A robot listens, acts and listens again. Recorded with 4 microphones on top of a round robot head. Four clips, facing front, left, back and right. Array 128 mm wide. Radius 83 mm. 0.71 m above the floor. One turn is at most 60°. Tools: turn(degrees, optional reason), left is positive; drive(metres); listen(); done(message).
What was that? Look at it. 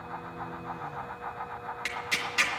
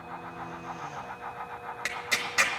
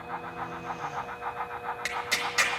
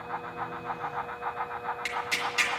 turn(degrees=60, reason="The tearing paper: 130° left.")
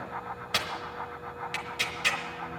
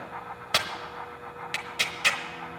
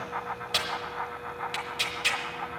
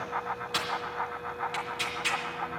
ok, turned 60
turn(degrees=60, reason="The tearing paper is now 95° left.")
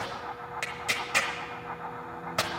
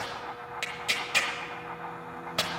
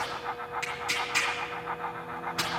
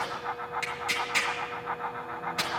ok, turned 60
turn(degrees=25, reason="The tearing paper is now 25° left.")
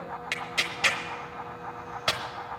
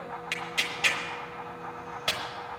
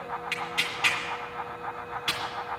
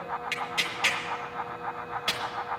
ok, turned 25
done("Facing the tearing paper.")